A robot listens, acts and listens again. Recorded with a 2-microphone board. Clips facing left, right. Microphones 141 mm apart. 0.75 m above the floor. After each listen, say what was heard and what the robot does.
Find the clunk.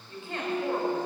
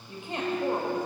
The clunk: about 35° left or 145° left. Turn 35° left.
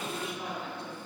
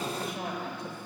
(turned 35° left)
Keep listening.
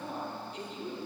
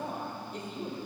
I heard a clunk, but can't make it out now. It was about straight ahead or 110° left.